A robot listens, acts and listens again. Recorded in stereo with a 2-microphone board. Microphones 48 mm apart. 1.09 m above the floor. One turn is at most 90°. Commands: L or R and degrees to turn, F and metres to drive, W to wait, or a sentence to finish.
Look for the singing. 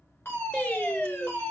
L30
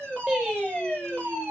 Facing the singing.